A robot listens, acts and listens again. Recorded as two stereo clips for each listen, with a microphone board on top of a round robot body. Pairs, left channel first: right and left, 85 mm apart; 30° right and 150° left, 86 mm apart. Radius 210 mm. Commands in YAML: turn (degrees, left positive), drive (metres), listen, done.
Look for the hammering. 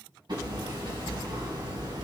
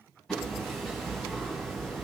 turn: 55
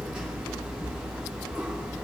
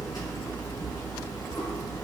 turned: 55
turn: 15
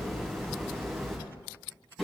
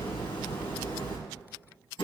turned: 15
done: "Found it: hammering, straight ahead, 2 to 4 m away."